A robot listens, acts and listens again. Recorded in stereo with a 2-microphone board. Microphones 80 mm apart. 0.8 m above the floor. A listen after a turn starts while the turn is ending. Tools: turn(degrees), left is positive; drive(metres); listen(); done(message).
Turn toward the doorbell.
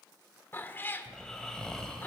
listen()
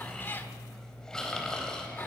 listen()
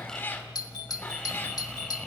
turn(degrees=55)
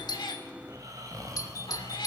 turn(degrees=55)
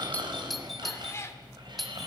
done("Found it: a doorbell, straight ahead.")